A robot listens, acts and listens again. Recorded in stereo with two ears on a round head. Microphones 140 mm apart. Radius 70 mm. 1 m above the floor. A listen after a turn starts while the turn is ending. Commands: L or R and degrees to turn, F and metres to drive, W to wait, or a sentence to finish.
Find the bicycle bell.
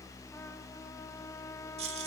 W
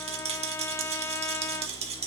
W
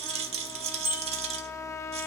R15
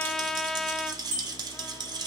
R150
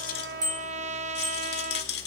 W
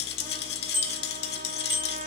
R15
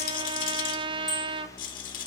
W
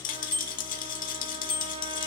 Found it: a bicycle bell, straight ahead, over 4 m away.